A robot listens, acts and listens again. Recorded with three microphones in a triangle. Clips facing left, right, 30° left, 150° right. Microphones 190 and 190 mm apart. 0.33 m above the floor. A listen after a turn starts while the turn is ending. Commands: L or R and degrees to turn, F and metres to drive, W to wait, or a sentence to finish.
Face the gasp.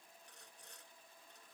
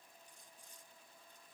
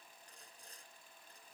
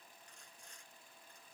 W
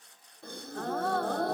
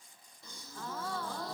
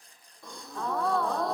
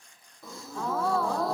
L120
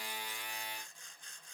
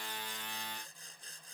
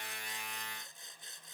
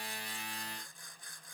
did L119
I heard a gasp from this way, but can't make it out now.